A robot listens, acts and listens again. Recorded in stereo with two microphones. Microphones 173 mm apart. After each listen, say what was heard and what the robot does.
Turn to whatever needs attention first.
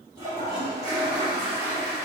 Keep listening.
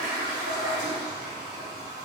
Keep listening.
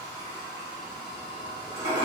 I can't make out anything urgent, only a toilet flushing.